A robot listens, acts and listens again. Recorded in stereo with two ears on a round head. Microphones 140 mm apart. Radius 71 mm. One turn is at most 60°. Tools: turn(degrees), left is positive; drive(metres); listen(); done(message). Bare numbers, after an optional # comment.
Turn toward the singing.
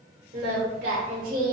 # The singing: about 60° right or 120° right.
turn(-60)
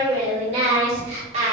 # So it is at 45° right.
turn(-45)
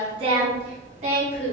# The singing is now 50° right.
turn(-50)
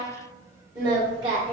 # The singing is now 30° right.
turn(-30)
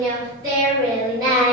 # The singing is now 25° right.
turn(-25)
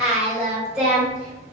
done("Facing the singing.")